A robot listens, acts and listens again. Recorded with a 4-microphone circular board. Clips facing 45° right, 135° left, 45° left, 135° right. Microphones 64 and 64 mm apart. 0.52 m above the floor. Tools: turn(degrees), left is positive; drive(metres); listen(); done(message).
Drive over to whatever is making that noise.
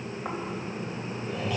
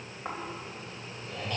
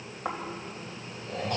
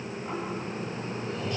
turn(degrees=40)
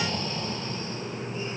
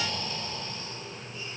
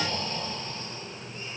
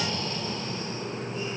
drive(metres=1.0)
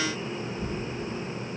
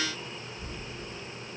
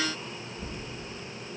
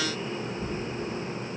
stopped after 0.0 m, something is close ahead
done("Something is in my way. I am facing the snoring but have not reached it.")